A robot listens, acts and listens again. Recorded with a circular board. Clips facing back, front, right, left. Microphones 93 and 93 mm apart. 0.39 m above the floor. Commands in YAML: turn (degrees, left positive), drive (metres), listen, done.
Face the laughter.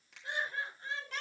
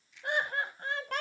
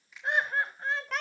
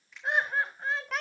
done: "Facing the laughter, 2 to 4 m away."